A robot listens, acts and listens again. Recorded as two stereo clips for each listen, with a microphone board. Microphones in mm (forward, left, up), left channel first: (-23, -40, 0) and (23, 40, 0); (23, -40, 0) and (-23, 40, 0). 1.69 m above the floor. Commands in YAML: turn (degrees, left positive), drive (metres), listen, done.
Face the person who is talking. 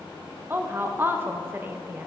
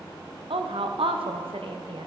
turn: 125
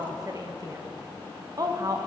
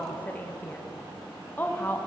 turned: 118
turn: 10
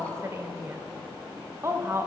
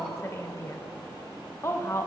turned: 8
done: "Facing the woman speaking, under 1 m away."